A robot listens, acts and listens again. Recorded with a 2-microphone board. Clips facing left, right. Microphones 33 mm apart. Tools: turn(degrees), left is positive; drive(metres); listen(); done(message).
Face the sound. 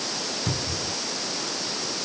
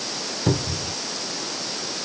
turn(degrees=-30)
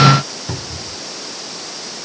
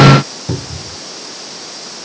turn(degrees=15)
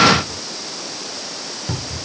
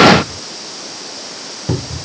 done("Facing the cupboard door.")